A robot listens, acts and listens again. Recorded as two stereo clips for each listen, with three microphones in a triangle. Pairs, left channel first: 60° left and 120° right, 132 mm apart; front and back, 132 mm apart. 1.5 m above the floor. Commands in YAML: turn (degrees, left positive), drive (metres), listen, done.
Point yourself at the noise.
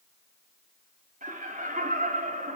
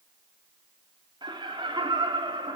turn: -125
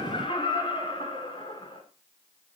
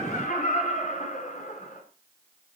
turn: 10
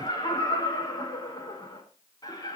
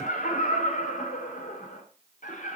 done: "Found it: laughter, straight ahead, over 4 m away."